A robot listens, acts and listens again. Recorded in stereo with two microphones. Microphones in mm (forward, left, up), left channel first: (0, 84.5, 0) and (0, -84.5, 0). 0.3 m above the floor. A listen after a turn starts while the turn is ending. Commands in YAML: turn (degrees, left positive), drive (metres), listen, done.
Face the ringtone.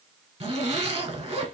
listen: true
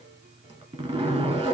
listen: true
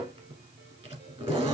done: "I can't make out a ringtone, only a zipper."